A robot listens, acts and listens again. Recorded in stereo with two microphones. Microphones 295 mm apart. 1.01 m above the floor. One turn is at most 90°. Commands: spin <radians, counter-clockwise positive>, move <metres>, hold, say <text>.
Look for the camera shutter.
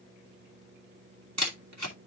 spin -1.13
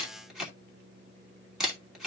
say Facing the camera shutter, 2 to 4 m away.